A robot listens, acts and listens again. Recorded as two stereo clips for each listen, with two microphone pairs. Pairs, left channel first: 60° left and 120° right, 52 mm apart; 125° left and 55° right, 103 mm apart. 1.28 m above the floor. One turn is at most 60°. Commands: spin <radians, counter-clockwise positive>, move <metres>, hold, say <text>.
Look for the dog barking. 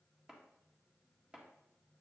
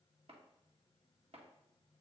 hold
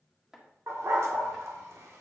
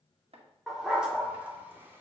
spin -1.05
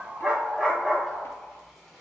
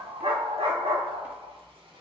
spin -0.61
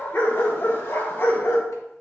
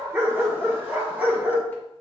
spin 0.35
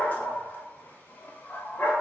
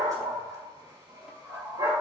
say Found it: a dog barking, straight ahead, 2 to 4 m away.